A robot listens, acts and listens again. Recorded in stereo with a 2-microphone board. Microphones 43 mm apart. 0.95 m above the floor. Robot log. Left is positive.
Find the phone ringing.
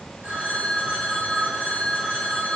note: The phone ringing: about 30° right or 150° right.
cmd yaw -30
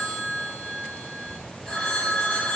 end: Facing the phone ringing, over 4 m away.